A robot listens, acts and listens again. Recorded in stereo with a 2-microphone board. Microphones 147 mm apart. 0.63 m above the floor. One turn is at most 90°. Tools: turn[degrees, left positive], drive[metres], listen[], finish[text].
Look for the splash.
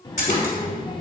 Thought: The splash: about 65° left or 115° left.
Action: turn[65]
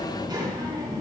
Action: listen[]
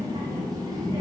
Action: finish[I heard a splash, but can't make it out now. It was about straight ahead or 50° left.]